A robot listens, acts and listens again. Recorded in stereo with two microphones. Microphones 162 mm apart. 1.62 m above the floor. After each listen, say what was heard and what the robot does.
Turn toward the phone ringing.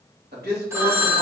The phone ringing: about 15° right or 165° right. Turn 15° right.
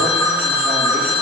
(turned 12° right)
Found it: a phone ringing, straight ahead, under 1 m away.